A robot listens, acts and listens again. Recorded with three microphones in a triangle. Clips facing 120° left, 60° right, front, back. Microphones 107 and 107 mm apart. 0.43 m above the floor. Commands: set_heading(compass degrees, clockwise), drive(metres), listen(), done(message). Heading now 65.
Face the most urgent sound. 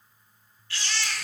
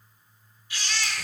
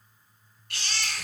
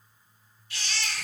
set_heading(50)
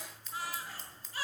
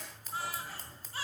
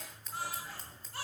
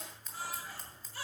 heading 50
done("Facing the baby crying.")